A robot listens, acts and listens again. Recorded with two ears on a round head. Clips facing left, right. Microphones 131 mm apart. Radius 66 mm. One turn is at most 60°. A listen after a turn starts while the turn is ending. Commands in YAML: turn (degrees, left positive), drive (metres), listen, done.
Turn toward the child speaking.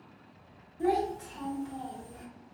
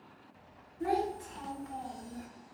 turn: 60
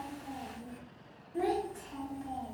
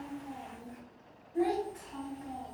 turn: 50
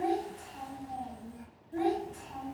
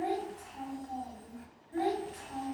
turn: 15
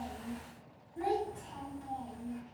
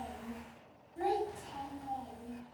done: "Found it: a child speaking, straight ahead."